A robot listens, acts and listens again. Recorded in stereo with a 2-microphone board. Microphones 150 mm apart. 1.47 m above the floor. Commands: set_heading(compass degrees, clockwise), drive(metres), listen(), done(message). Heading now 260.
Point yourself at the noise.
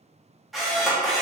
set_heading(230)
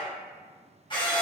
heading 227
set_heading(77)
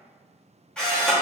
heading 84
done("Facing the camera shutter, 1 to 2 m away.")